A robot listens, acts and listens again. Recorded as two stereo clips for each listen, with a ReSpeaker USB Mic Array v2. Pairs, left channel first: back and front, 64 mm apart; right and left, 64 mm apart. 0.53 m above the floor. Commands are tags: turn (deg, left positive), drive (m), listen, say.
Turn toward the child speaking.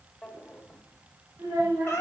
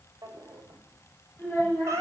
<turn deg="-25"/>
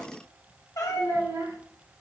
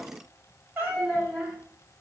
<say>Found it: a child speaking, straight ahead, 1 to 2 m away.</say>